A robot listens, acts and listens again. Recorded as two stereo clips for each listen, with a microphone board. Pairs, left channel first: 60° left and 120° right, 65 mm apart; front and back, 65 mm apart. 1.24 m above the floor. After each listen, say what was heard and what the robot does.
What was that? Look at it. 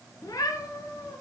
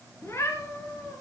The cat meowing: 40° left. Turn 40° left.
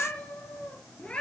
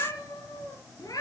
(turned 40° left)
The cat meowing is now 15° right. Turn 15° right.
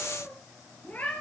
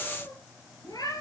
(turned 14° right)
Found it: a cat meowing, straight ahead, over 4 m away.